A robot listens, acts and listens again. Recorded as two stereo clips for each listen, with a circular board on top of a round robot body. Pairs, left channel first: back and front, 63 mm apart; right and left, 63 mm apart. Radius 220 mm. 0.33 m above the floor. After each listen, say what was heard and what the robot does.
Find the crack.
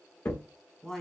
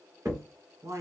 The crack: 135° left. Turn 135° left.
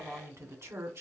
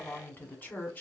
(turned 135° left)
I heard a crack from this way, but can't make it out now.